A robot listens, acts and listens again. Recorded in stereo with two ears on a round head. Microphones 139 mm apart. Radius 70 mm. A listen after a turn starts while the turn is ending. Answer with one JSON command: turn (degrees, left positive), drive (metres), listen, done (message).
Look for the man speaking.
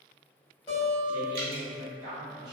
{"turn": -25}
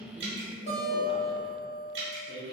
{"done": "Found it: a man speaking, straight ahead, 1 to 2 m away."}